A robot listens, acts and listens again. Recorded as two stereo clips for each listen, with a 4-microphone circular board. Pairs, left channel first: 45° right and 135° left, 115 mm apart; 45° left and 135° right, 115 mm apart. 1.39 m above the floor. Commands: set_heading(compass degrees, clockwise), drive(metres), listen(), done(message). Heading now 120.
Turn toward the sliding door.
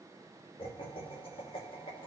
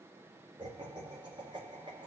listen()
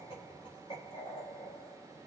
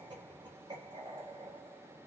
listen()
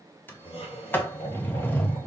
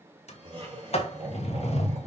set_heading(95)
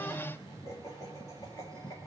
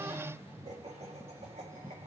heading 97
listen()
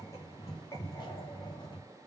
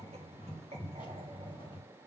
done("Found it: a sliding door, straight ahead.")